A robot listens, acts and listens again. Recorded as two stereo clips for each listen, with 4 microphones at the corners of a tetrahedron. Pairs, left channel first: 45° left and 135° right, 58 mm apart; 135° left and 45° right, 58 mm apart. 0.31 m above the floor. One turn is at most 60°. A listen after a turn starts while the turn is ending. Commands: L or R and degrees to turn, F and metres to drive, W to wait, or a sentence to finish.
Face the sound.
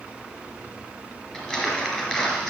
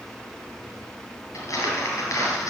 L60
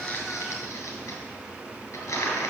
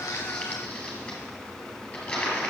L60
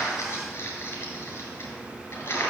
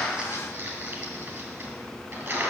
Found it: crumpling, straight ahead, 2 to 4 m away.